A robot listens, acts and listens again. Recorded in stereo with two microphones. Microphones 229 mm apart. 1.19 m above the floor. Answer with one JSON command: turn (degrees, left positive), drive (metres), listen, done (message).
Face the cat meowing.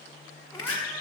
{"turn": 30}
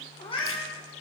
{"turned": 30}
{"turn": 15}
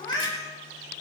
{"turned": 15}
{"turn": 30}
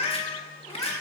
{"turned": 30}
{"turn": 30}
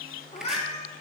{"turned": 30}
{"turn": 155}
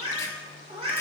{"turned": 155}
{"turn": -25}
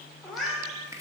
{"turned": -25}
{"done": "Facing the cat meowing."}